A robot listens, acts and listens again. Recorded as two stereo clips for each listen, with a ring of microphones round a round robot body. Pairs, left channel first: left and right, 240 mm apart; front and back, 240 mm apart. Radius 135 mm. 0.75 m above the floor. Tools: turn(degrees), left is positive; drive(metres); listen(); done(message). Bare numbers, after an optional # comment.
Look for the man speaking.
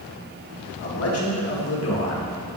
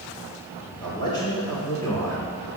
# The man speaking: 80° left.
turn(80)
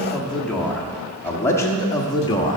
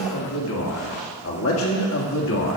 # The man speaking is now 25° left.
turn(25)
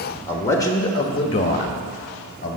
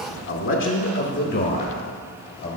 # The man speaking is now 40° left.
turn(40)
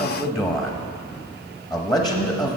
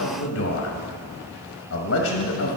done("Facing the man speaking.")